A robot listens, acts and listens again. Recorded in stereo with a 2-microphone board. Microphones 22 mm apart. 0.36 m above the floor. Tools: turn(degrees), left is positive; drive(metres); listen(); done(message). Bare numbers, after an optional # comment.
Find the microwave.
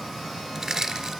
listen()
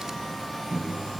# The microwave: about 60° right or 120° right.
turn(-60)
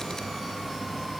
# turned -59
listen()
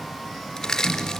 done("Found it: a microwave, straight ahead, 2 to 4 m away.")